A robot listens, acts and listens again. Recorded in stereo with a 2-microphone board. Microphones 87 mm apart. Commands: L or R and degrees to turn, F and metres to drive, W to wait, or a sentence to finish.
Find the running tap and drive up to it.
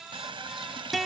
R70
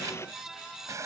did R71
R35
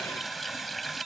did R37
F1.0
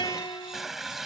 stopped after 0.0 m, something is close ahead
Something is in my way. I am facing the running tap but have not reached it.